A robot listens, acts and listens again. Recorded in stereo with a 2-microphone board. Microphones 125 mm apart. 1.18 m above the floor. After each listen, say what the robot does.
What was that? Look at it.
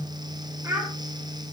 Turn 25° right.
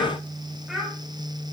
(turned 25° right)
Found it: a child speaking, straight ahead, 2 to 4 m away.